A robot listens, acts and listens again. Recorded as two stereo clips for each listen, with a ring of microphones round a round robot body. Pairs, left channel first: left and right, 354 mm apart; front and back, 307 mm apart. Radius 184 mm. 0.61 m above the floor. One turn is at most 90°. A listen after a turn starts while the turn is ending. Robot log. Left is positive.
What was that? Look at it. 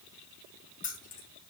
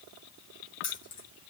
note: The keys jangling: 20° left.
cmd yaw +20
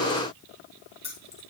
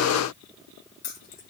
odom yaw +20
note: The keys jangling is now 15° left.
cmd yaw +15
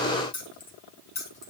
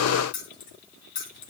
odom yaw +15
note: The keys jangling is now 15° left.
cmd yaw +15
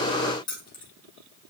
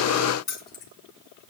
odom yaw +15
note: The keys jangling is now 10° left.
cmd yaw +10
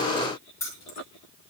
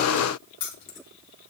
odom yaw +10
note: The keys jangling is now 10° left.
cmd yaw +10
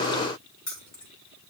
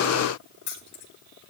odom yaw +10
end: Found it: keys jangling, straight ahead, 2 to 4 m away.